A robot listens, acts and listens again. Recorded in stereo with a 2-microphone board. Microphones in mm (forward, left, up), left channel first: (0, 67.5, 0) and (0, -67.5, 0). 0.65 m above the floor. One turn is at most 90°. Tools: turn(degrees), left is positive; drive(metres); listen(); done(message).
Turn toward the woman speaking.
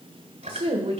turn(degrees=-55)
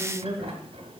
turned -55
turn(degrees=-10)
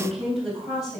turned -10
done("Facing the woman speaking, 2 to 4 m away.")